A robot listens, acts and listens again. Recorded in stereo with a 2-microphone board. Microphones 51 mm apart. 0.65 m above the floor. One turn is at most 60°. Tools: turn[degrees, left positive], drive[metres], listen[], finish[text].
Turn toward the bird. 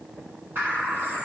Thought: The bird: about 45° right or 135° right.
Action: turn[-45]
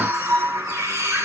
Thought: So it is at 90° right.
Action: turn[-60]
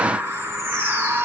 Thought: The bird is now 30° right.
Action: turn[-30]
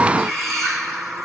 Action: finish[Facing the bird.]